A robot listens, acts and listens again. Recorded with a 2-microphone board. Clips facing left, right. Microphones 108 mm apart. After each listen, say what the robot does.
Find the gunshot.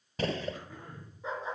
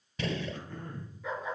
Turn 40° left.
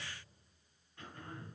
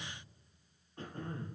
Keep listening.
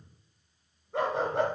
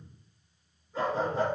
I heard a gunshot, but can't make it out now. It was about straight ahead or 100° left.